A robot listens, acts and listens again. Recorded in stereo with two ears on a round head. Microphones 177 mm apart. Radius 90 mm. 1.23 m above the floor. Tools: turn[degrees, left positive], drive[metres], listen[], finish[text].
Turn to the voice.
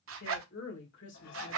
Thought: The woman speaking: about 60° left or 120° left.
Action: turn[60]
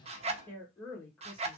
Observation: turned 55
Thought: So it is at 10° left.
Action: turn[10]
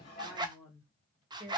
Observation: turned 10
Action: finish[Found it: a woman speaking, straight ahead.]